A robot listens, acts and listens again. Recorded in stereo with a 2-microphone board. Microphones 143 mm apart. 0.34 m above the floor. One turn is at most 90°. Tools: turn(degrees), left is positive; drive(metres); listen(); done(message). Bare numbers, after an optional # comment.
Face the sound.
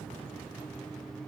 listen()
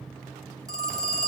# The phone ringing: about 25° right or 155° right.
turn(-25)
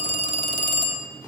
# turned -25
# So it is at 125° right.
turn(-90)
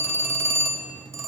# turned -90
# The phone ringing is now 20° right.
turn(-20)
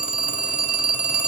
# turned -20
# The phone ringing is now 10° right.
turn(-10)
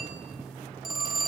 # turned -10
done("Found it: a phone ringing, straight ahead.")